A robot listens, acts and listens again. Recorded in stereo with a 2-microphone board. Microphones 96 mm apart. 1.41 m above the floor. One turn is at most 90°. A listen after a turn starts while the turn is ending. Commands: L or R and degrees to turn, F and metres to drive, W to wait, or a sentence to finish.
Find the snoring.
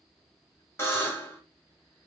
W
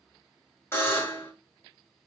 W
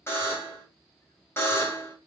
I can't make out snoring to turn to.